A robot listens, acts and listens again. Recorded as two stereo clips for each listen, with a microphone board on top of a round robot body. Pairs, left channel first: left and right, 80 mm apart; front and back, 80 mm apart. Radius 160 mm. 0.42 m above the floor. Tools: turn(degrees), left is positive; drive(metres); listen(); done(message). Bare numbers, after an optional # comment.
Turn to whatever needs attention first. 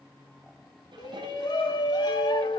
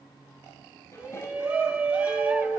# The shout: 105° left.
turn(105)
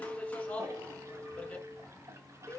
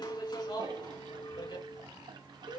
# The shout is now 15° left.
turn(15)
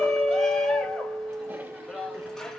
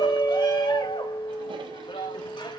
done("Found it: a shout, straight ahead.")